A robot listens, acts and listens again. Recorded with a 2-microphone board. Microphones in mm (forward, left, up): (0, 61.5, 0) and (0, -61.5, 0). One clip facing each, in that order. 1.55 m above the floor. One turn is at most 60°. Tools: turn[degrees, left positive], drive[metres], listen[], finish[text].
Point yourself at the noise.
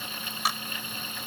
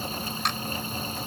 Action: turn[30]
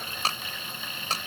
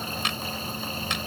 Thought: So it is at 145° left.
Action: turn[60]
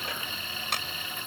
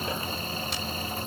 Thought: Nothing new. It was at 85° left.
Action: turn[60]
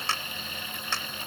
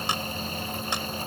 Thought: The clap is now 15° right.
Action: turn[-15]
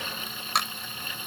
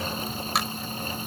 Action: finish[Facing the clap.]